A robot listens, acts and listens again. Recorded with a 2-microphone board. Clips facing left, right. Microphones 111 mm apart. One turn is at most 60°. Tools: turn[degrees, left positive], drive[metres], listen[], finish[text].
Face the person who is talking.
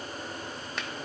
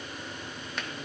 Action: listen[]
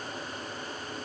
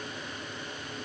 Action: listen[]
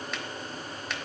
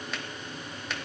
Action: finish[I can't make out anyone speaking, only a finger snap.]